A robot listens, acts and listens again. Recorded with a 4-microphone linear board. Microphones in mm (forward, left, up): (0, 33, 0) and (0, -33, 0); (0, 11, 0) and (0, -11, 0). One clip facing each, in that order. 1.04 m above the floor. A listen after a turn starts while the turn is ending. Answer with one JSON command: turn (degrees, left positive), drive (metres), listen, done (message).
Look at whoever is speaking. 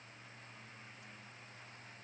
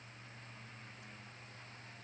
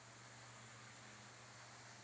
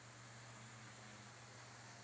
{"listen": true}
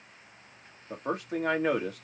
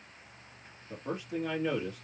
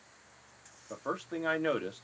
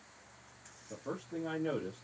{"turn": 60}
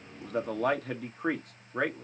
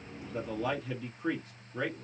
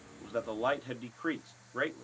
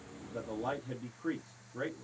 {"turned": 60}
{"turn": 55}
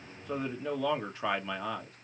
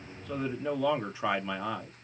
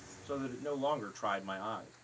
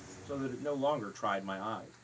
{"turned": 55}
{"done": "Found it: a man speaking, straight ahead."}